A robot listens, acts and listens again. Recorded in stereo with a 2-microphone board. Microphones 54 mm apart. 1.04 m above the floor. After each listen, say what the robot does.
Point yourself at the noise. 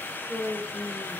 Turn 30° left.
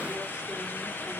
Keep listening.
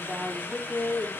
Turn 30° right.
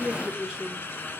Turn 10° right.
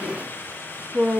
Turn 25° right.
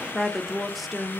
Facing the woman speaking.